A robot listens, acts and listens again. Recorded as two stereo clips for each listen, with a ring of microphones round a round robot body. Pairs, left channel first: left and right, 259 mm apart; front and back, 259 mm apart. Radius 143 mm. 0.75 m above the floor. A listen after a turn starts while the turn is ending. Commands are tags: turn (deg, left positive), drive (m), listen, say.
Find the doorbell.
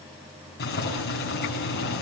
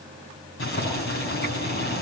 <listen/>
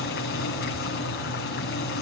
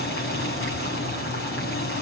<listen/>
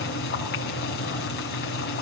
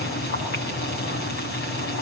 <say>I can't make out a doorbell, only boiling.</say>